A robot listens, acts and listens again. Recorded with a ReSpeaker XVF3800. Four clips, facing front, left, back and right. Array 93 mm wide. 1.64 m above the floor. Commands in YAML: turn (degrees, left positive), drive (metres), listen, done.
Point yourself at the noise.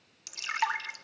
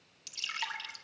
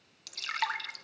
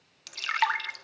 turn: -75
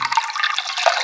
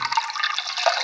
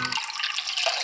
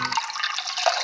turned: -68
done: "Found it: dripping, straight ahead."